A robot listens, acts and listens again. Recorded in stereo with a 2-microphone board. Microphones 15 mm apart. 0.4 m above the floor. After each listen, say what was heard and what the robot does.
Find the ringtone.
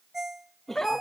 The ringtone: about 25° right or 155° right. Turn 25° right.
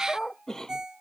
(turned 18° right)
So it is at 135° right. Turn 135° right.
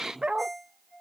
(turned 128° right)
The ringtone is now 10° right. Turn 10° right.
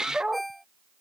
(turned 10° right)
Facing the ringtone.